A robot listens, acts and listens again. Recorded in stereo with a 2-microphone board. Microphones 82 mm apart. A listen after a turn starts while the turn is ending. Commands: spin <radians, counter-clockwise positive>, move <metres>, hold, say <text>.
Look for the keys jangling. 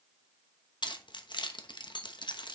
spin 1.22
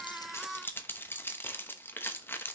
spin 0.52
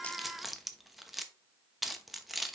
say Facing the keys jangling.